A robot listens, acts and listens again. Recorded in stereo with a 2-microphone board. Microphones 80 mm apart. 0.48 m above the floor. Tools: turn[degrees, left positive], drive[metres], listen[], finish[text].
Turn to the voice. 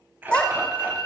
Action: turn[30]
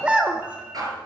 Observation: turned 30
Thought: So it is at 15° right.
Action: turn[-15]
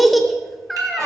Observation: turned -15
Action: finish[Found it: a child speaking, straight ahead.]